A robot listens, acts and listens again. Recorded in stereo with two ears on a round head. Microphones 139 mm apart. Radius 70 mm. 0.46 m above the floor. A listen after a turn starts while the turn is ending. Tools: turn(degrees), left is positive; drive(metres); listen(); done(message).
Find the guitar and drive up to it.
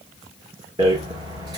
listen()
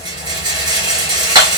listen()
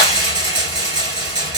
done("I can't make out a guitar, only a rattle.")